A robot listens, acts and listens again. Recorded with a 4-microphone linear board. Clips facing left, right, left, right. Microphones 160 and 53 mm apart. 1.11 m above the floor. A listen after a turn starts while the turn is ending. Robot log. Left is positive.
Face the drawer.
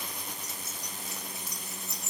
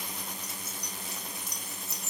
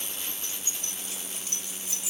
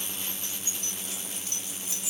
cmd idle
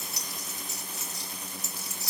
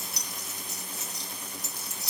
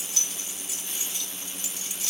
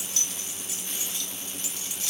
cmd idle
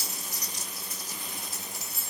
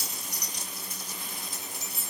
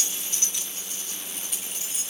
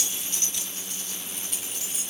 end: I can't make out a drawer to turn to.